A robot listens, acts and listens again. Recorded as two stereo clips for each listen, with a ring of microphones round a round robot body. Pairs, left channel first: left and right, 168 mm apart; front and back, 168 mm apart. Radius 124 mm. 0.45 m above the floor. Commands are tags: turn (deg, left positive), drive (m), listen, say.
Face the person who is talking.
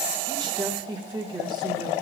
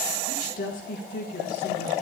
<turn deg="-30"/>
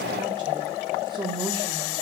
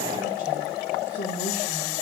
<turn deg="-30"/>
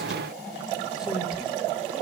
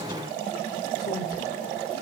<listen/>
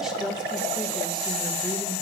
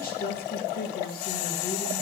<say>Facing the woman speaking, 1 to 2 m away.</say>